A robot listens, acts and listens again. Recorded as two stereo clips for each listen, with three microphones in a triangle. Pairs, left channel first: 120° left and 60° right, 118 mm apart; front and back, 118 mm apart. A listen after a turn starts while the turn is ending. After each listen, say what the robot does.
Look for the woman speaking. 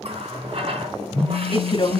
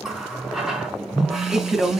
Turn 90° left.
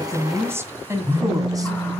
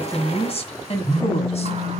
Facing the woman speaking, 1 to 2 m away.